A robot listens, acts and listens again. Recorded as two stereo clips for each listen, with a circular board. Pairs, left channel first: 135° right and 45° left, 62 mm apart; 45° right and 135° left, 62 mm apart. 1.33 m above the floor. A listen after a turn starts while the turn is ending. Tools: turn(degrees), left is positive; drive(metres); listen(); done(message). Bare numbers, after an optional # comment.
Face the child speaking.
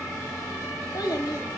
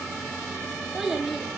# The child speaking: 140° right.
turn(-140)
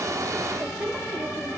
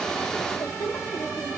# The child speaking is now 25° right.
turn(-25)
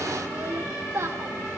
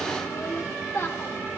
done("Found it: a child speaking, straight ahead.")